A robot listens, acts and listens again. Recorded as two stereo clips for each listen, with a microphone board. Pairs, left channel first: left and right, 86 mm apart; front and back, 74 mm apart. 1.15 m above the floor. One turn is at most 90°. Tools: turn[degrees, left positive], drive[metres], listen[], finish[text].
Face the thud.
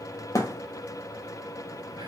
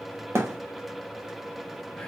Thought: The thud: 135° left.
Action: turn[90]
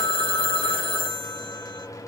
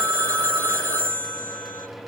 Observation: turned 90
Thought: Nothing new. It was at 45° left.
Action: turn[45]
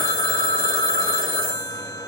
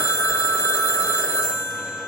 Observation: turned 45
Action: finish[Facing where the thud came from. I can't hear it now.]